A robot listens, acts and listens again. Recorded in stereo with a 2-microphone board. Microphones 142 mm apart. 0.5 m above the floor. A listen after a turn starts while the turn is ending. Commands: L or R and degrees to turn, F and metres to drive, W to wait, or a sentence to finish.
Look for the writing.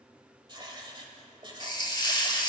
R35
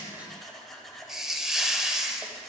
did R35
Facing the writing, 1 to 2 m away.